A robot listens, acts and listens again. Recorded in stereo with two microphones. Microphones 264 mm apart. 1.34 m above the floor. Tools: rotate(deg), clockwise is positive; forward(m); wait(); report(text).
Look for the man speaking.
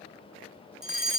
wait()
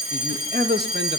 rotate(40)
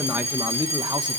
rotate(15)
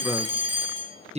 rotate(25)
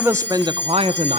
rotate(30)
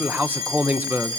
report("Found it: a man speaking, straight ahead.")